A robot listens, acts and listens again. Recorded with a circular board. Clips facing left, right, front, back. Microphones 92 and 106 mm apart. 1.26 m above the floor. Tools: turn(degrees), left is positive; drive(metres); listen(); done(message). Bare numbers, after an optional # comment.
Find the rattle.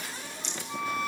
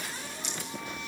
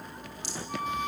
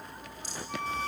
# The rattle: 10° right.
turn(-10)
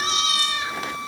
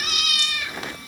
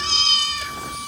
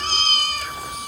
listen()
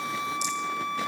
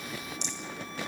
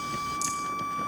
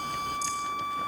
listen()
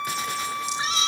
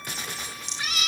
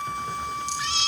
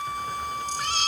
done("Facing where the rattle came from. I can't hear it now.")